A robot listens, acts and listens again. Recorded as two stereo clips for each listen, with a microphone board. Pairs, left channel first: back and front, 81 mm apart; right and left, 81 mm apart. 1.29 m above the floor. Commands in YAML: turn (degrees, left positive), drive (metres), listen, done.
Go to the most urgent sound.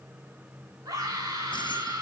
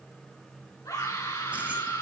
turn: -45
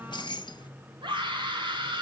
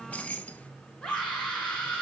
turn: -10
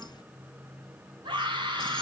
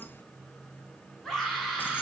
drive: 1.0
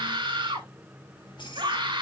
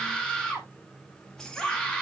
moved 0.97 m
turn: -10
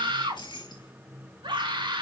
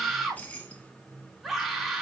drive: 1.0
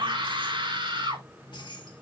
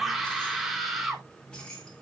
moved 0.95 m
drive: 1.0
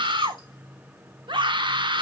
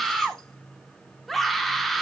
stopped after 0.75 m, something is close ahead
done: "Arrived at the scream, straight ahead."